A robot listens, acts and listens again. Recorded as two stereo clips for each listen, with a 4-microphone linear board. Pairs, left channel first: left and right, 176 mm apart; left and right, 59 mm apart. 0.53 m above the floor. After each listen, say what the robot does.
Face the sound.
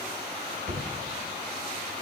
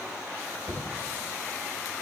Turn 75° right.
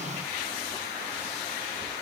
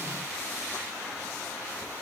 Keep listening.
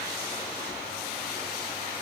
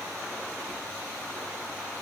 I heard a thud, but can't make it out now. It was about straight ahead or 30° right.